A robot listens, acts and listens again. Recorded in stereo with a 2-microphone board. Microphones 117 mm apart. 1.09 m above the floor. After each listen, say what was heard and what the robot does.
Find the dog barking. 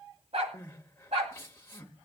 The dog barking: about 65° right or 115° right. Turn 65° right.
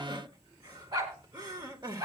So it is at 35° right. Turn 35° right.
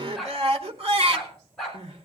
Facing the dog barking.